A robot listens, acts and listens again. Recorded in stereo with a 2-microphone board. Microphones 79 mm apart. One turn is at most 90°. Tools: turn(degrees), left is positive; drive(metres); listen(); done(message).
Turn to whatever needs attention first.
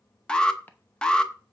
turn(degrees=30)
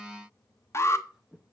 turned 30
turn(degrees=90)
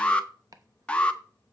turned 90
turn(degrees=20)
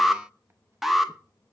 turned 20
done("Facing the alarm, under 1 m away.")